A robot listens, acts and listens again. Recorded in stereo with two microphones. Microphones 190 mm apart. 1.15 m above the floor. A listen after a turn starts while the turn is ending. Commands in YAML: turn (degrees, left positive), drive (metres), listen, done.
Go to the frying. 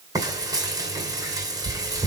turn: -20
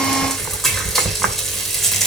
drive: 1.0
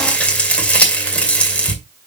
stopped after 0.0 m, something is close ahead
done: "Something is in my way. I am facing the frying but have not reached it."